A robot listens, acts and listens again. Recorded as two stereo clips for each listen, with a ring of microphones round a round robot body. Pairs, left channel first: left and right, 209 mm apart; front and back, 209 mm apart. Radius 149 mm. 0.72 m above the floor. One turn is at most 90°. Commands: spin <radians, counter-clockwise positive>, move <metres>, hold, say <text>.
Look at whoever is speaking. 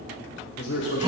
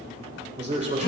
spin 1.57
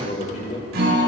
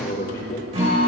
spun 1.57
spin 0.70
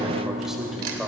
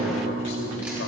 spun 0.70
hold
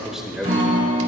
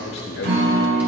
say Found it: a man speaking, straight ahead.